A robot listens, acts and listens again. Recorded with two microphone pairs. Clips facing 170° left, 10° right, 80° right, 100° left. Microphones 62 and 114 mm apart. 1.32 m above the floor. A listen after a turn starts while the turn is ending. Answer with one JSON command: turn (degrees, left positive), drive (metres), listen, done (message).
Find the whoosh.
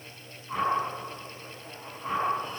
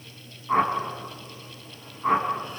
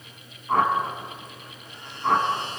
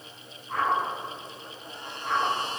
{"turn": -55}
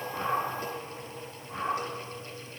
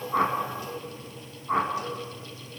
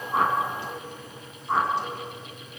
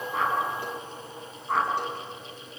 {"done": "Found it: a whoosh, straight ahead, over 4 m away."}